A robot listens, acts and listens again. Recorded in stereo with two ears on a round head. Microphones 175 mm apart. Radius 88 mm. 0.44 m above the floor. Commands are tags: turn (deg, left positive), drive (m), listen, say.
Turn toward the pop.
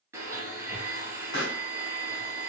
<turn deg="55"/>
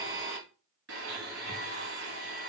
<listen/>
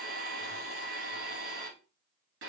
<say>I heard a pop, but can't make it out now. It was about straight ahead or 70° left.</say>